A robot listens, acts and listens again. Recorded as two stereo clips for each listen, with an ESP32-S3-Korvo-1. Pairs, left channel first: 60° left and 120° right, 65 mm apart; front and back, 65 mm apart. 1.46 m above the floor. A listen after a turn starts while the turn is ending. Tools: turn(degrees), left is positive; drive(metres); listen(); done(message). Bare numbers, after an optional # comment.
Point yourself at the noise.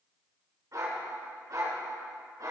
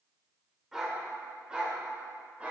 # The dog barking: 110° right.
turn(-110)
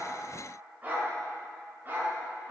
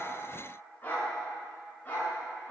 # The dog barking is now 65° right.
turn(-65)
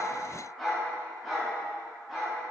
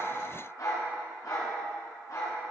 # The dog barking is now 35° right.
turn(-35)
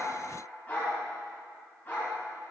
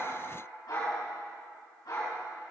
done("Facing the dog barking, over 4 m away.")